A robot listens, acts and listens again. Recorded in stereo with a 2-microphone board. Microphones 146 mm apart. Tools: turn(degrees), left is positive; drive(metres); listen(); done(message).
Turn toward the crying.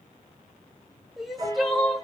turn(degrees=30)
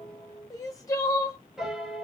turn(degrees=150)
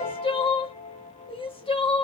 turn(degrees=40)
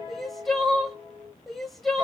done("Facing the crying, under 1 m away.")